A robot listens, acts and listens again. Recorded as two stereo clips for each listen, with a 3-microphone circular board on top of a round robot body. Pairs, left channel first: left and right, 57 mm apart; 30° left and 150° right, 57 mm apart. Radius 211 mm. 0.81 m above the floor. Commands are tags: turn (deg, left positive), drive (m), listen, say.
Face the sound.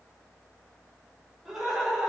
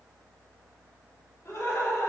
<say>Facing the laughter, 2 to 4 m away.</say>